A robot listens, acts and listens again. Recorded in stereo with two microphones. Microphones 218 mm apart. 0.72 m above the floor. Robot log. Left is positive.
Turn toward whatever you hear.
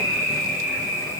cmd idle
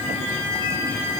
cmd idle
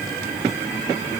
end: I can't make out anything to turn to.